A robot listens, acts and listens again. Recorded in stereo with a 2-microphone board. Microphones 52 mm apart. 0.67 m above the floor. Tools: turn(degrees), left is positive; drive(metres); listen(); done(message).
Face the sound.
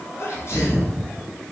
turn(degrees=60)
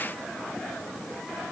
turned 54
listen()
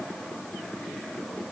done("I heard a sneeze, but can't make it out now. It was about 5° left or 65° left.")